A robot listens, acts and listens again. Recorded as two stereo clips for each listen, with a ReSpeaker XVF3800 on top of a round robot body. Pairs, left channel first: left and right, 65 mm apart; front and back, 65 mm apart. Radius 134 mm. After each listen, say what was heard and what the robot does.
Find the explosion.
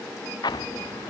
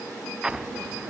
The explosion: 100° left. Turn 100° left.
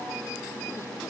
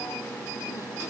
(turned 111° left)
Nothing new. It was at 10° right. Turn 10° right.
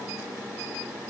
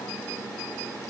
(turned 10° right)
Facing where the explosion came from. I can't hear it now.